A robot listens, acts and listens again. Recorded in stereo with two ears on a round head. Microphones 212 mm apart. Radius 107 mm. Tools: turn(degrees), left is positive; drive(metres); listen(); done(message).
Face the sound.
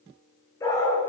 turn(degrees=30)
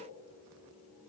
listen()
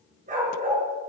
turn(degrees=-35)
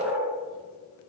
turn(degrees=-10)
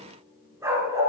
turn(degrees=-15)
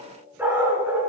turn(degrees=-10)
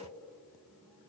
listen()
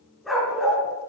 done("Found it: a dog barking, straight ahead, 2 to 4 m away.")